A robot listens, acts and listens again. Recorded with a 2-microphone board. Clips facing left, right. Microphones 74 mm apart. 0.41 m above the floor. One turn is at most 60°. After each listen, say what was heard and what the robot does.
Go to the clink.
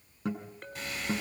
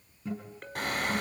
Turn 30° left.
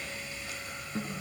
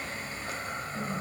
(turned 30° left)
Keep listening.
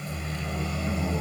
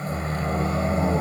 Keep listening.
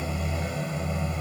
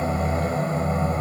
I heard a clink, but can't make it out now. It was about 30° right or 150° left. I did not reach it.